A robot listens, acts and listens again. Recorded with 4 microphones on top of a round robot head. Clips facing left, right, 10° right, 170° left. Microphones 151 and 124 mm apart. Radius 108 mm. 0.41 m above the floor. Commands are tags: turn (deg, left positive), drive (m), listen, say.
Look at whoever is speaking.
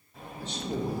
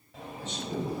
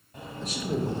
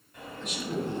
<turn deg="40"/>
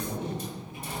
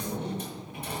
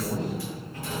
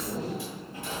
<say>Facing the man speaking.</say>